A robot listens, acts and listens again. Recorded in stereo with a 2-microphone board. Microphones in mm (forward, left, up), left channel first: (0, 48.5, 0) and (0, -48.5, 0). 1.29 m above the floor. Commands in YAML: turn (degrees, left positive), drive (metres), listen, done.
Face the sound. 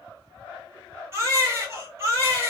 turn: -30
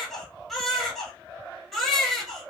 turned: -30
done: "Facing the baby crying."